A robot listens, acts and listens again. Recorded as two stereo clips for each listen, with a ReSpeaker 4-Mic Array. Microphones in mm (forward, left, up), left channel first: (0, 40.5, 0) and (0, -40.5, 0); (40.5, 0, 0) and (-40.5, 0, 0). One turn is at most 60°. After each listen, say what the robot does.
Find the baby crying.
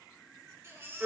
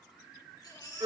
Turn 35° right.
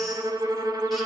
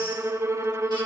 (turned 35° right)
Keep listening.
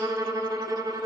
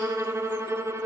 Keep listening.
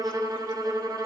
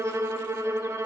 Facing where the baby crying came from. I can't hear it now.